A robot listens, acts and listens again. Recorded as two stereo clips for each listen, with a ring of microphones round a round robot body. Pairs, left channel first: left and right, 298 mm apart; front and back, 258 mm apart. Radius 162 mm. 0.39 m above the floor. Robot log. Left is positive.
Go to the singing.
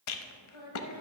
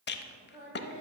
note: The singing: 125° left.
cmd yaw +125
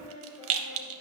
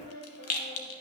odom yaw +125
note: The singing is now 30° left.
cmd yaw +30
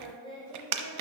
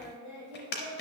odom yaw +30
note: The singing is now 15° left.
cmd yaw +15
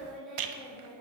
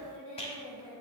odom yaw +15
cmd fwd 1.0
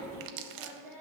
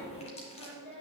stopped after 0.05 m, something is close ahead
end: Blocked. The singing is further on, straight ahead.